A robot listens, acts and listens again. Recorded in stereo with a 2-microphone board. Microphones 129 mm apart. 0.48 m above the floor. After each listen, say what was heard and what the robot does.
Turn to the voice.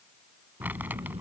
The child speaking: about 55° right or 125° right. Turn 55° right.
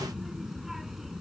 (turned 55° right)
Facing the child speaking.